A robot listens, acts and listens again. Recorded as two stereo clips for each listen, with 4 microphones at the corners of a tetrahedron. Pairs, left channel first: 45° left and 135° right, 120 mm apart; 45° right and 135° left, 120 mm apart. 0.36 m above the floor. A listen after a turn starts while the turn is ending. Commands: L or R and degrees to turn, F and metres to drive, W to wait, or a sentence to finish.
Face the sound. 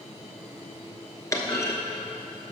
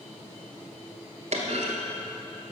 L110
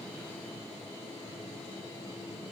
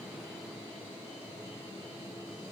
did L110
I heard a clunk from this way, but can't make it out now.